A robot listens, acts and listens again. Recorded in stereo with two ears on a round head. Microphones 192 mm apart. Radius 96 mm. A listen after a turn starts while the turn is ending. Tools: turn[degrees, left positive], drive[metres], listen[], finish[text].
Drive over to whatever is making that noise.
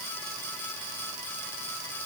Action: listen[]
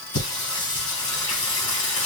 Thought: The singing: about 65° left or 115° left.
Action: turn[65]
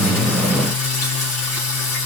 Thought: So it is at 40° left.
Action: turn[40]
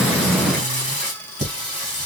Action: drive[1.0]
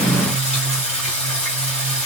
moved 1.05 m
Action: drive[1.0]
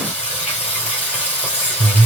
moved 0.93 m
Thought: The singing is now 10° left.
Action: turn[10]
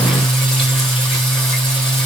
Action: drive[1.0]
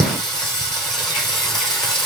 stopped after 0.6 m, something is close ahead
Action: finish[I am next to the singing.]